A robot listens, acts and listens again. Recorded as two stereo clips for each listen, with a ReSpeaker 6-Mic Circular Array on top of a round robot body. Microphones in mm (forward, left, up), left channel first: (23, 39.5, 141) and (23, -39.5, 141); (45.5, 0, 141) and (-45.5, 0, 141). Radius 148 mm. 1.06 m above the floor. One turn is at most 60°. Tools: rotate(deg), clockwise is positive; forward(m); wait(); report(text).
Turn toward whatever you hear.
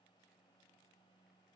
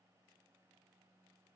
wait()
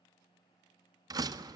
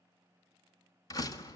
rotate(50)
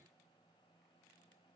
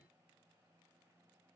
report("I heard a door slam from this way, but can't make it out now.")